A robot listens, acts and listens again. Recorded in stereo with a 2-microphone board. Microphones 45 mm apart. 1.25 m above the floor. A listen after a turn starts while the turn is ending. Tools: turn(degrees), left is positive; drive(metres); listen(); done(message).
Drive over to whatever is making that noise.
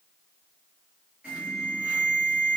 turn(degrees=-25)
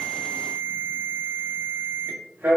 turn(degrees=-125)
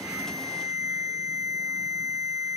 turn(degrees=20)
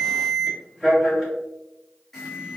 drive(metres=1.0)
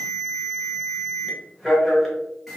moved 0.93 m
drive(metres=1.0)
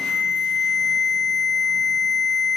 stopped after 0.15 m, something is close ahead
done("Arrived at the alarm, straight ahead.")